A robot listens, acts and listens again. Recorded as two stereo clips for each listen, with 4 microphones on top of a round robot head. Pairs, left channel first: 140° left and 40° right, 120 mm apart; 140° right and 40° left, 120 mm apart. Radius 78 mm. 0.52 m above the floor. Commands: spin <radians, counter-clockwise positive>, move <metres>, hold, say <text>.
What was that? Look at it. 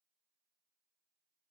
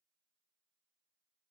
hold
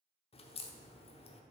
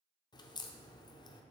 spin 2.97
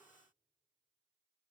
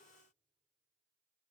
say Facing where the crack came from. I can't hear it now.